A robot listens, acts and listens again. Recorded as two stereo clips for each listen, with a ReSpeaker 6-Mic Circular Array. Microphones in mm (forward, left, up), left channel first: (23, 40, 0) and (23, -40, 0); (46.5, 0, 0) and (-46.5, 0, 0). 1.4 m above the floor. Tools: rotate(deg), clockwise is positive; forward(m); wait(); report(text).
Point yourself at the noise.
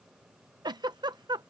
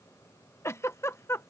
rotate(60)
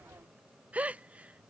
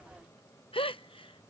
rotate(15)
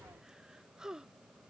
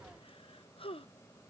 report("Facing the giggle.")